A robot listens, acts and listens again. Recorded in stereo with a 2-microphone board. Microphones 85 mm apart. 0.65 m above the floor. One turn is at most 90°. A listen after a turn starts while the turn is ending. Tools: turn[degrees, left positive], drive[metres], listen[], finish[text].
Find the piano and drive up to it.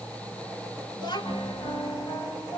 Action: turn[90]
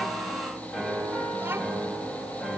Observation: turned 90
Thought: So it is at 10° left.
Action: turn[10]
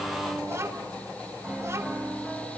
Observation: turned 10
Action: drive[1.0]
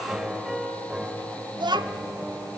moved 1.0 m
Action: drive[1.0]
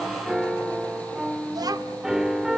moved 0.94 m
Action: drive[1.0]
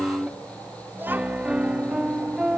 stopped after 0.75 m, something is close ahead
Thought: The piano is now 15° right.
Action: turn[-15]
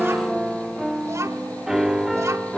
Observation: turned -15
Action: finish[Arrived at the piano, straight ahead.]